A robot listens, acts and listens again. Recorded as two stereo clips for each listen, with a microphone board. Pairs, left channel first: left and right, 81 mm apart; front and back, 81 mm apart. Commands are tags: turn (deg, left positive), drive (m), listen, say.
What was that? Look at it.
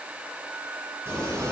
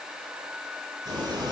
<turn deg="-145"/>
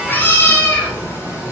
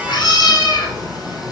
<turn deg="35"/>
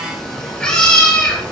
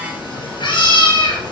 <turn deg="15"/>
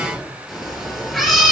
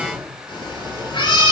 <say>Facing the cat meowing, over 4 m away.</say>